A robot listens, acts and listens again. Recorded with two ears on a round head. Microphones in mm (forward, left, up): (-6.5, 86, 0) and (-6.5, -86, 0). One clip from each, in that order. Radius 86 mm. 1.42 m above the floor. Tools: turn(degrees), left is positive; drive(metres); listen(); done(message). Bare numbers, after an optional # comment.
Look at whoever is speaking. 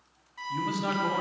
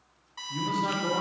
# The man speaking: about 35° left or 145° left.
turn(35)
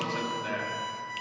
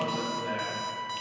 # So it is at 105° left.
turn(105)
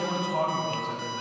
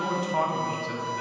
# The man speaking is now 20° right.
turn(-20)
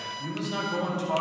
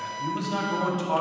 done("Found it: a man speaking, straight ahead.")